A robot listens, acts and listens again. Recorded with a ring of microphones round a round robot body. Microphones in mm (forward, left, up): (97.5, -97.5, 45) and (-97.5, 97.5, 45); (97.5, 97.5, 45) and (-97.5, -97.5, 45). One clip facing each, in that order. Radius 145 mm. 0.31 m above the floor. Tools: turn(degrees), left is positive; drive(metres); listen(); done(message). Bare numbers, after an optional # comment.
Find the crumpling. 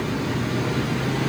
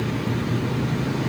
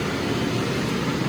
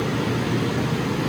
listen()
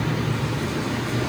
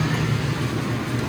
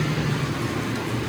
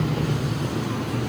listen()
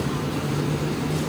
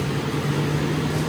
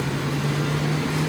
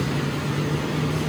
done("I can't make out crumpling.")